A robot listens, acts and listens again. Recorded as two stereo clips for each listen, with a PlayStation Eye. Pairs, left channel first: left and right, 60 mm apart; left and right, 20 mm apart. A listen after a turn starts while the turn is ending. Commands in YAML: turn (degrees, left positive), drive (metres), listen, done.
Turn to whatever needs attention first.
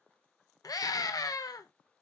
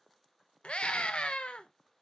turn: 90
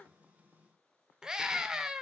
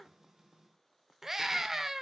turn: -10
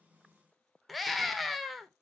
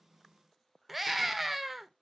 done: "Found it: a scream, straight ahead, under 1 m away."